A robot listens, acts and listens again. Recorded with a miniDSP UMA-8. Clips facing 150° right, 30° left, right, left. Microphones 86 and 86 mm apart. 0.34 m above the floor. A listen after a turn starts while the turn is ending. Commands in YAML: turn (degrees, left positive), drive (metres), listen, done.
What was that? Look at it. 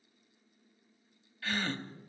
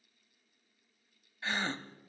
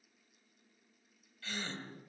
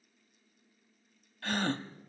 turn: 95
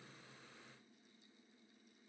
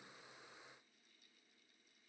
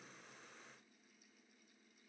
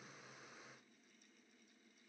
done: "I heard a gasp from this way, but can't make it out now."